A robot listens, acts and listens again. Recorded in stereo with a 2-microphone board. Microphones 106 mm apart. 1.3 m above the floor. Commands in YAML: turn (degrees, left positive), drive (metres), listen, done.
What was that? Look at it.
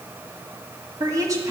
turn: -30
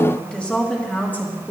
turn: 20
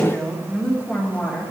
turn: 10
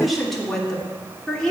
turn: 10
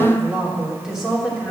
done: "Found it: a woman speaking, straight ahead."